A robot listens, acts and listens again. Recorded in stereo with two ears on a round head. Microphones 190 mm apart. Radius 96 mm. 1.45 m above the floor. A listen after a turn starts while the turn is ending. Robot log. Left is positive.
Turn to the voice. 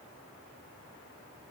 cmd idle
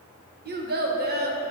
note: The child speaking: about 50° right or 130° right.
cmd yaw -50
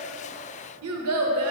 note: So it is at 80° right.
cmd yaw -80
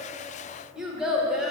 end: Found it: a child speaking, straight ahead, 1 to 2 m away.